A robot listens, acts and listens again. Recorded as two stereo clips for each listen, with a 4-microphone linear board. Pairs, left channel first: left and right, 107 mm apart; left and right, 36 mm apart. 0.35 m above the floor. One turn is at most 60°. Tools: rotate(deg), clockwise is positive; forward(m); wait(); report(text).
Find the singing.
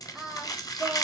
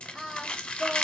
rotate(30)
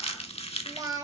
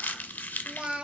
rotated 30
rotate(60)
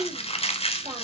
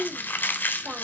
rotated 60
rotate(60)
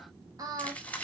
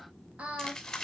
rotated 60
rotate(40)
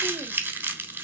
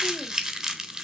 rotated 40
wait()
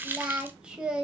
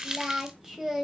rotate(10)
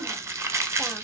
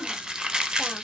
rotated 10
wait()
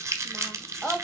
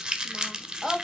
report("Facing the singing, 1 to 2 m away.")